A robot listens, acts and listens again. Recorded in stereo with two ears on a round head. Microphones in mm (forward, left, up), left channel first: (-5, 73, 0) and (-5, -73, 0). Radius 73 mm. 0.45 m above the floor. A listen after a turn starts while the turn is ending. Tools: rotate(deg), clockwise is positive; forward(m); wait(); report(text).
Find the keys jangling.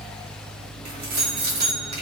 rotate(70)
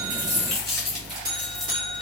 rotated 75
report("Found it: keys jangling, straight ahead.")